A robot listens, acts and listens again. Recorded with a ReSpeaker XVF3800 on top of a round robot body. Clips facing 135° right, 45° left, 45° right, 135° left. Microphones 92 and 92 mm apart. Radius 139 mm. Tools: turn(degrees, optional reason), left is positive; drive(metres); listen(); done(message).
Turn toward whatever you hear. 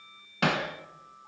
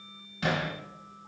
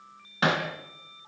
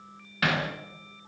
turn(degrees=-110, reason="The hammering: 110° right.")
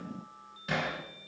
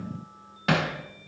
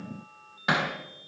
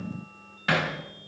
turn(degrees=25, reason="The hammering is now 25° left.")
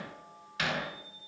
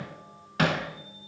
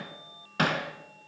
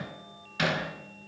done("Facing the hammering.")